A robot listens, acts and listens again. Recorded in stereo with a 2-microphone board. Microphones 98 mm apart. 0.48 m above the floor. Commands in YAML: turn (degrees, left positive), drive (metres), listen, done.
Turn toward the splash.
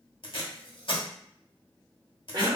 listen: true
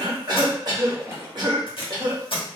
turn: -30
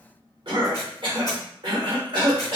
listen: true
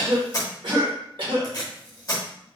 done: "I heard a splash, but can't make it out now. It was about straight ahead or 120° right."